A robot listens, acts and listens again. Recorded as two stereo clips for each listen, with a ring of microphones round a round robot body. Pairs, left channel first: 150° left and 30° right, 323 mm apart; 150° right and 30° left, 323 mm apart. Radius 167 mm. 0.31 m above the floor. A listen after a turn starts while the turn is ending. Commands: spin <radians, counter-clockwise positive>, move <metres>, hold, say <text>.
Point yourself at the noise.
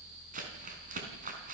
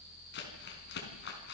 spin -1.66
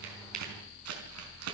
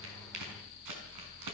spin 0.17
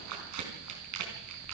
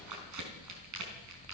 say Facing the crumpling, over 4 m away.